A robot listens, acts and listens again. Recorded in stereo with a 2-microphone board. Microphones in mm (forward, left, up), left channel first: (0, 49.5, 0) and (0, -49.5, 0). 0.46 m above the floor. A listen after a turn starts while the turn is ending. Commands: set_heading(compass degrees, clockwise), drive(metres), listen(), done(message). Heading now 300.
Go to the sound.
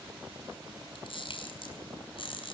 set_heading(240)
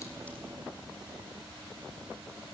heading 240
listen()
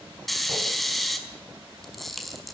drive(1.0)
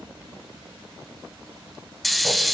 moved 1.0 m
drive(1.0)
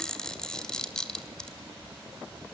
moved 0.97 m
set_heading(230)
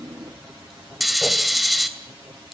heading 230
drive(1.0)
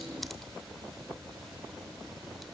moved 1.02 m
listen()
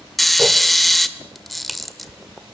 drive(1.0)
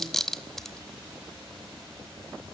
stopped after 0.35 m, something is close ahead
done("I am next to the camera shutter.")